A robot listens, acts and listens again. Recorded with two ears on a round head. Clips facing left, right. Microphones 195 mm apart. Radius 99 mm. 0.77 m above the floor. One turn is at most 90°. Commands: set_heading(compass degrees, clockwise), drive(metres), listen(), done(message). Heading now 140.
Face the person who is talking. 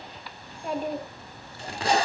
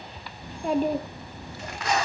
set_heading(205)
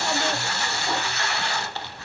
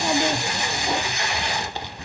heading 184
set_heading(254)
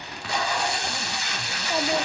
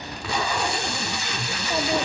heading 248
listen()
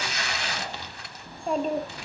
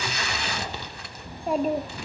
done("Found it: a child speaking, straight ahead, under 1 m away.")